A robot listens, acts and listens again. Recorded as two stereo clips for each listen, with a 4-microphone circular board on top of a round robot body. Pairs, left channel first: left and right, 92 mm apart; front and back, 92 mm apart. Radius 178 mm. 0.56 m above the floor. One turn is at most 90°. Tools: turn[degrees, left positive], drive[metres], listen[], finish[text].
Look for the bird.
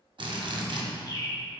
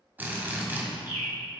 Thought: The bird: 40° left.
Action: turn[40]
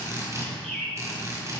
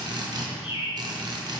Action: finish[Found it: a bird, straight ahead, 1 to 2 m away.]